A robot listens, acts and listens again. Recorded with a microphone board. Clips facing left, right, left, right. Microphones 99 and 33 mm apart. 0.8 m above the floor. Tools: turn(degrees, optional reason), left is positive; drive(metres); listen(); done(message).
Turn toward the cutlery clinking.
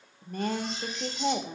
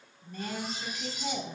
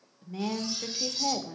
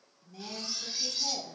turn(degrees=-30)
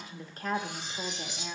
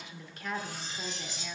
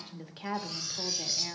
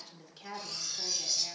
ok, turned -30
turn(degrees=15, reason="So it is at 15° left.")
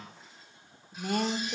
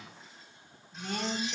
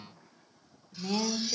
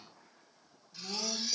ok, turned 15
listen()
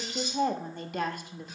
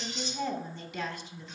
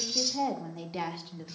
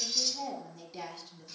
done("Found it: cutlery clinking, straight ahead, 1 to 2 m away.")